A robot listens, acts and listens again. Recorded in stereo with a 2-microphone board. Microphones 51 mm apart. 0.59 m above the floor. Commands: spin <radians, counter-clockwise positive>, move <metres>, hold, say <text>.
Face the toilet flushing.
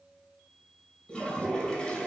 spin 0.26
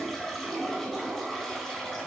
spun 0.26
say Found it: a toilet flushing, straight ahead.